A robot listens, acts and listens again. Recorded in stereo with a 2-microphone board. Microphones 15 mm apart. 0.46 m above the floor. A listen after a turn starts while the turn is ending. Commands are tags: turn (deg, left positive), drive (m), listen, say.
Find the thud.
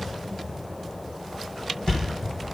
<turn deg="60"/>
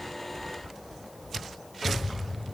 <listen/>
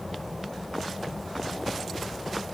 <say>I heard a thud, but can't make it out now. It was about straight ahead or 60° left.</say>